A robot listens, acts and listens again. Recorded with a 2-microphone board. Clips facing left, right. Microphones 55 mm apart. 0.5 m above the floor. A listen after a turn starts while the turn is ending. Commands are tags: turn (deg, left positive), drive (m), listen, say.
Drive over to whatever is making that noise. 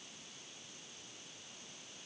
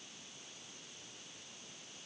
<listen/>
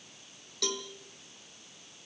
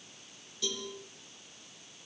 <turn deg="75"/>
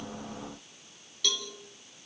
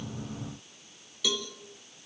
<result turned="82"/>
<drive m="1.0"/>
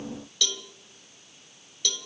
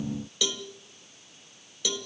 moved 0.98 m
<turn deg="-15"/>
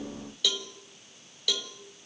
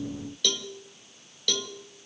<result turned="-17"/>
<drive m="1.0"/>
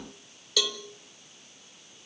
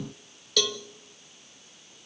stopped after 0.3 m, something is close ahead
<say>I am next to the cowbell.</say>